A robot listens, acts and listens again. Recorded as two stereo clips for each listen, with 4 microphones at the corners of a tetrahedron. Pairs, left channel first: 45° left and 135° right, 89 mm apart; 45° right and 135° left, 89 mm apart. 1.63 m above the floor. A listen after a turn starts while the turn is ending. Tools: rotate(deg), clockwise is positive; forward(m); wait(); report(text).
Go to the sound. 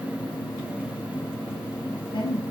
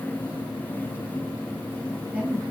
rotate(-65)
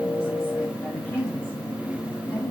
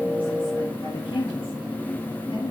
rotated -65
rotate(20)
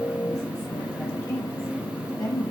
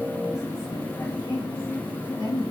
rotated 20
forward(1.0)
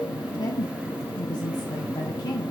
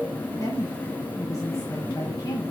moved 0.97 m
forward(1.0)
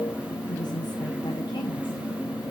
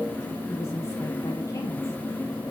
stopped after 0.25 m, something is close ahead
wait()
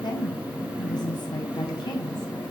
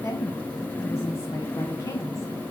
rotate(-10)
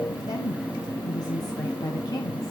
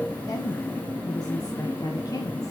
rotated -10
report("Arrived at the woman speaking, straight ahead.")